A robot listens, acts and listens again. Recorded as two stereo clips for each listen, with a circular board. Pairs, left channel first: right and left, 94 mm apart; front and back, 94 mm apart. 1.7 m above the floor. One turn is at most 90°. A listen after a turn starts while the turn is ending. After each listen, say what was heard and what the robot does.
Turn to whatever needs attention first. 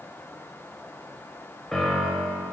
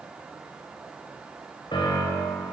Keep listening.
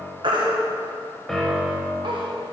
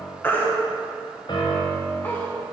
The baby crying: 65° left. Turn 65° left.
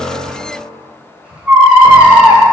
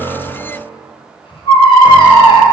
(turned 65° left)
The baby crying is now 15° left. Turn 15° left.
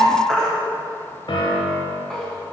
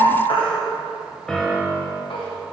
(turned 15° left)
Facing the baby crying, 1 to 2 m away.